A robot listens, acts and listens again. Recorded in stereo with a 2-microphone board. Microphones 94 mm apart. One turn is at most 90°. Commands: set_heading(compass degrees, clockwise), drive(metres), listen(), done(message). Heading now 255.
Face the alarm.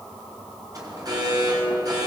set_heading(295)
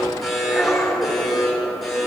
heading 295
done("Facing the alarm, over 4 m away.")